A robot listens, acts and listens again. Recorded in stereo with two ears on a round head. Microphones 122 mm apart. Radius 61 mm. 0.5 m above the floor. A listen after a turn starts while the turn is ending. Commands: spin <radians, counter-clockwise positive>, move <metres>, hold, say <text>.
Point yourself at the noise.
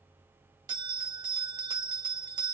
spin -0.61
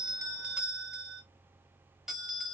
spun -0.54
say Found it: a bell, straight ahead, under 1 m away.